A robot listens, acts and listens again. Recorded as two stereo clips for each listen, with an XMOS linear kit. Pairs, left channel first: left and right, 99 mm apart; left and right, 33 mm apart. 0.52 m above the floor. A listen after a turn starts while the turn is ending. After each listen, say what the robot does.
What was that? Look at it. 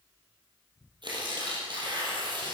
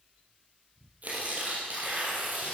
Turn 50° right.
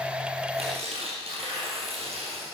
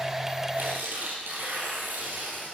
Turn 80° right.
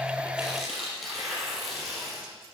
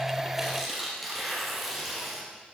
Facing the tearing paper.